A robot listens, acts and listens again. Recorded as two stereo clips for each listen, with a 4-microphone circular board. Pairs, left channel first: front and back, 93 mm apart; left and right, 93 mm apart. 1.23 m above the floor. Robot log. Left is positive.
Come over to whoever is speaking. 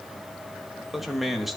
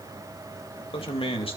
note: The man speaking: 90° left.
cmd yaw +90
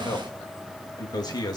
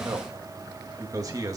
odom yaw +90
note: The man speaking is now 40° right.
cmd yaw -40
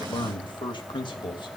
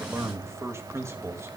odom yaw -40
note: The man speaking is now 30° right.
cmd yaw -30
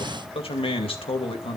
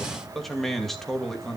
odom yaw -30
cmd fwd 1.0
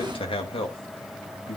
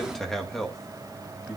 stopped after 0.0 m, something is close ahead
end: Blocked. The man speaking is further on, straight ahead.